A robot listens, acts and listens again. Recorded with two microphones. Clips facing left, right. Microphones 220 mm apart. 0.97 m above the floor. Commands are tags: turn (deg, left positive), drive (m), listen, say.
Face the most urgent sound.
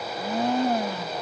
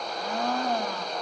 <listen/>
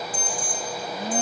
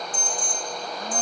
<turn deg="90"/>
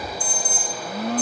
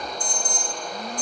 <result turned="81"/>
<say>Found it: an alarm, straight ahead, over 4 m away.</say>